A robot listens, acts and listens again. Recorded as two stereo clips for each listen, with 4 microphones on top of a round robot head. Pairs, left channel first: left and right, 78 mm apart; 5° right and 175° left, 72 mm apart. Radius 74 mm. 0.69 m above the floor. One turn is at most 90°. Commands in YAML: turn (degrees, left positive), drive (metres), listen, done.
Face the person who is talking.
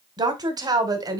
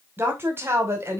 turn: -90
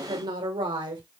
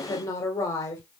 turn: -60
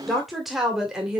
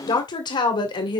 turn: -10
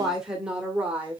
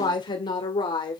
turn: -15
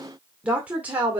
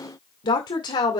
turn: -20
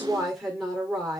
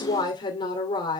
done: "Found it: a woman speaking, straight ahead."